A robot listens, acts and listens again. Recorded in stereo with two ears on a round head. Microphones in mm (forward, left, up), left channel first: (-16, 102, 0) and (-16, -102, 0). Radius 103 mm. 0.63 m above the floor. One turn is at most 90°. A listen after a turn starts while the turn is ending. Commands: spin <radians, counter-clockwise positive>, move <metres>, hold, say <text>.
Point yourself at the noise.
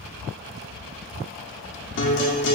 spin 0.96
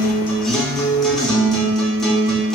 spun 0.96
say Facing the guitar.